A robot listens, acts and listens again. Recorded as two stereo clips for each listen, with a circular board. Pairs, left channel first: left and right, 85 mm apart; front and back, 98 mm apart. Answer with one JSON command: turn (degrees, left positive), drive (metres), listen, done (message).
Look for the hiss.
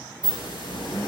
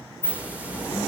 {"turn": 105}
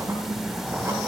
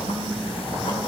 {"listen": true}
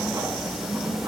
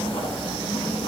{"listen": true}
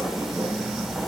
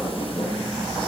{"done": "Facing where the hiss came from. I can't hear it now."}